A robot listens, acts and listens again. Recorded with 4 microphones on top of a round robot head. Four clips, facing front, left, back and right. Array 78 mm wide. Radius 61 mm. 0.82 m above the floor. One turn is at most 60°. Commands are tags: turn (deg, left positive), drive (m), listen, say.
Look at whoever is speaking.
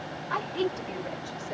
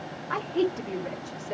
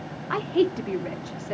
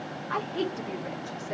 <turn deg="60"/>
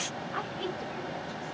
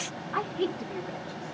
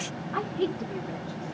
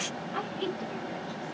<turn deg="60"/>
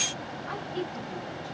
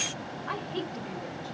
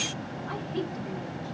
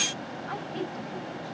<turn deg="60"/>
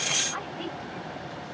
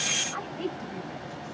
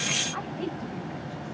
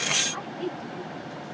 <turn deg="25"/>
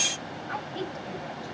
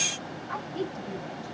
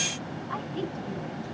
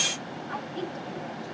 <say>Facing the woman speaking.</say>